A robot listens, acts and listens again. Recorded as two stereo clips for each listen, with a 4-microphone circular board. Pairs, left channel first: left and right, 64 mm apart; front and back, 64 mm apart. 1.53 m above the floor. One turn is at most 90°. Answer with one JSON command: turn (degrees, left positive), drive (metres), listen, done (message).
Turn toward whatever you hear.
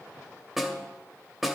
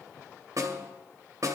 {"turn": -90}
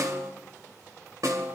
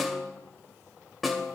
{"turn": -90}
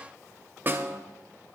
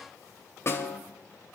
{"turn": -35}
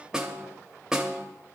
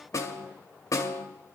{"turn": -10}
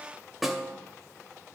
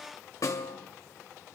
{"done": "Found it: a snare drum, straight ahead."}